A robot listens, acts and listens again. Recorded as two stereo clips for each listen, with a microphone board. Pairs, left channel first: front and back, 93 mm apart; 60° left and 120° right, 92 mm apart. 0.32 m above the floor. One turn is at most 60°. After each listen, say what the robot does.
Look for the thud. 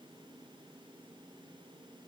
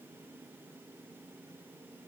Keep listening.
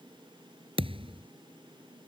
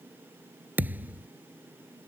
Turn 60° left.
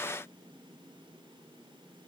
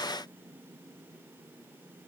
Turn 60° left.
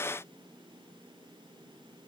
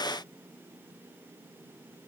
Turn 50° left.
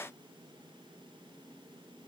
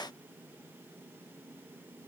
Facing where the thud came from. I can't hear it now.